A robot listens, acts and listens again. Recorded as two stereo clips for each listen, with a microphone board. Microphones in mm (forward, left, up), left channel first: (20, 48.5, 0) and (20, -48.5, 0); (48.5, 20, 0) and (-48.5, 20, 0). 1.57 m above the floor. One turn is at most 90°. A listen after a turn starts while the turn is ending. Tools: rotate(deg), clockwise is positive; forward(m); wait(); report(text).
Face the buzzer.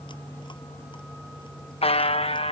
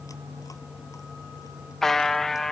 rotate(-85)
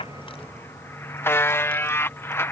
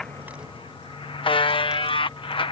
rotate(-25)
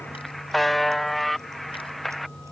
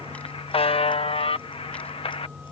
report("Found it: a buzzer, straight ahead.")